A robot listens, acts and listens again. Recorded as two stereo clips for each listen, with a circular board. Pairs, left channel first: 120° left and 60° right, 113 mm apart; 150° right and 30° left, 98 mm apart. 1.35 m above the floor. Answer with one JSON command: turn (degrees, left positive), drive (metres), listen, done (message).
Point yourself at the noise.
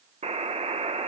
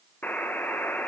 {"turn": -80}
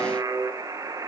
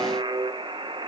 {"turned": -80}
{"done": "Facing the buzzer, under 1 m away."}